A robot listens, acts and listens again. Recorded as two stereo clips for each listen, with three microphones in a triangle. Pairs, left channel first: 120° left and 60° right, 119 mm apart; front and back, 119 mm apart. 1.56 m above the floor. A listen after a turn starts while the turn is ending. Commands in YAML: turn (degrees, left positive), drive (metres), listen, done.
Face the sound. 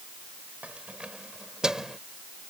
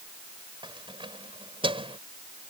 turn: -145
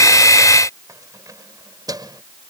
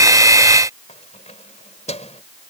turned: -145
turn: -10
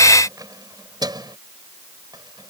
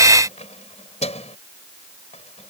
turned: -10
turn: -10
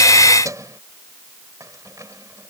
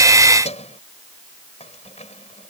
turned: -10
done: "Found it: keys jangling, straight ahead."